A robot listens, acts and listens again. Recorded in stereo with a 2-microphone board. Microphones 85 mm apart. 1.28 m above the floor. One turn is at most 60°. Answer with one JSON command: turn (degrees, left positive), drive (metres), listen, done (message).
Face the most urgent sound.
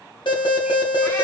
{"turn": 60}
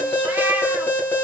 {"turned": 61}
{"turn": 25}
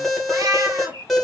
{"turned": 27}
{"done": "Facing the alarm."}